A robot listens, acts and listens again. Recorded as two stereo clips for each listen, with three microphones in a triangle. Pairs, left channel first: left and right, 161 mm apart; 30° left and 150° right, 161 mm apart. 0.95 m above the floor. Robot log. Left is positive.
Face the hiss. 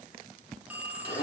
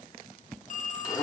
cmd idle
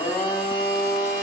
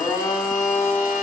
cmd idle
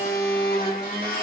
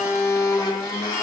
end: I can't make out a hiss, only a blender and a phone ringing.